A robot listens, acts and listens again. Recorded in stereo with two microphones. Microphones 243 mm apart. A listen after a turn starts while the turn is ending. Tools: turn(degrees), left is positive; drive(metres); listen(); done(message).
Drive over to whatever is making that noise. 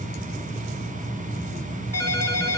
turn(degrees=-70)
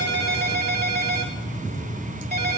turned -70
turn(degrees=-40)
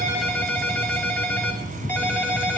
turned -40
drive(metres=1.0)
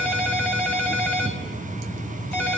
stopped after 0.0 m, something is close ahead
done("Blocked. The ringtone is further on, straight ahead.")